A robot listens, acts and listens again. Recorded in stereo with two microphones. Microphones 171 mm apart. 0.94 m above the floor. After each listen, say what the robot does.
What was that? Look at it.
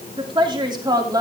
Turn 20° right.
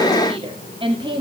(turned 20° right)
Turn 30° right.
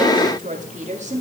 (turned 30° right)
Turn 135° right.
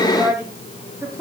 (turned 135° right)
Turn 20° right.
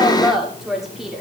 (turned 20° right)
Found it: a woman speaking, straight ahead, 2 to 4 m away.